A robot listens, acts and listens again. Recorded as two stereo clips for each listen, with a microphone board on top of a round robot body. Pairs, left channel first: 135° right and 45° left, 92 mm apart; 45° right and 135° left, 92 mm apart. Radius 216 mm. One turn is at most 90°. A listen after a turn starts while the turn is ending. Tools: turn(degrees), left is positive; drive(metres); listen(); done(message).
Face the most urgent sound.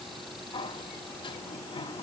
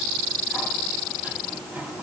listen()
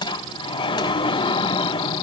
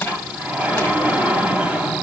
listen()
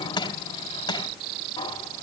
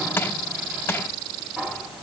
done("I can't make out anything urgent to turn to.")